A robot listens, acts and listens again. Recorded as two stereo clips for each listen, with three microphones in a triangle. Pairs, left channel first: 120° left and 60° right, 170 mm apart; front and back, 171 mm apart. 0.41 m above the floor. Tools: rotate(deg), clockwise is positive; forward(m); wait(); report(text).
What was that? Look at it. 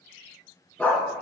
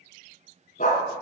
rotate(-40)
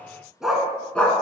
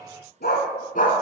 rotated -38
rotate(-40)
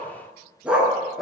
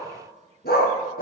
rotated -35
rotate(-30)
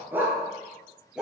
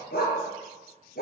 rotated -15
rotate(-25)
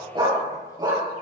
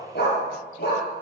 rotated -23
rotate(-10)
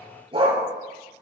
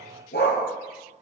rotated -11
report("Found it: a dog barking, straight ahead, 2 to 4 m away.")